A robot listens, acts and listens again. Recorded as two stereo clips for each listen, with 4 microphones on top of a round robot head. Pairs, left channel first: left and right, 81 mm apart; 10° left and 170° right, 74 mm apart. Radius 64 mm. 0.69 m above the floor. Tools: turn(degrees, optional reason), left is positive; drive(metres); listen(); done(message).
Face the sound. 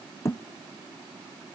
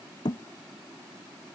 turn(degrees=35, reason="The thud: 35° left.")
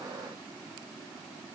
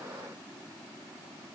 done("I heard a thud from this way, but can't make it out now.")